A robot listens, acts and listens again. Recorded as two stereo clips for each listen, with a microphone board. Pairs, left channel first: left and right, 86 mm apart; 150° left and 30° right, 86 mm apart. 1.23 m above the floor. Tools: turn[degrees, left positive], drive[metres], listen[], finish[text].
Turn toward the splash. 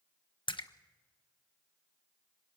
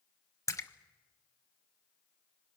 Thought: The splash: 100° left.
Action: turn[100]
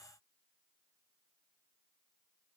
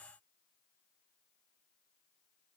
Action: finish[Facing where the splash came from. I can't hear it now.]